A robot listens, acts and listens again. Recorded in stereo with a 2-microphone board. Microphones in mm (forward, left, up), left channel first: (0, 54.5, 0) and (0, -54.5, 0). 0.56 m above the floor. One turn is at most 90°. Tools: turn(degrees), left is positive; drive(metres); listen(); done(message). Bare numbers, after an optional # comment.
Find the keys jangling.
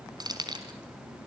# The keys jangling: about 40° right or 140° right.
turn(-40)
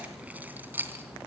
# So it is at 20° right.
turn(-20)
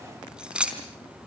# The keys jangling is now 10° right.
turn(-10)
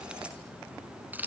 # The keys jangling is now 15° right.
turn(-15)
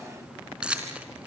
# The keys jangling is now 10° right.
turn(-10)
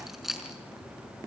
done("Facing the keys jangling, over 4 m away.")